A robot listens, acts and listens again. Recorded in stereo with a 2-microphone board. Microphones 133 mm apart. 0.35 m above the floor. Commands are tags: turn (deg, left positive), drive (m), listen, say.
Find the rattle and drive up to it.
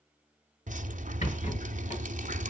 <turn deg="55"/>
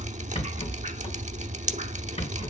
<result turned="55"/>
<turn deg="60"/>
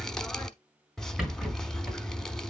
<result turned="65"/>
<drive m="1.0"/>
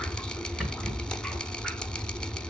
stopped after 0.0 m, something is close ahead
<say>Blocked. The rattle is further on, straight ahead.</say>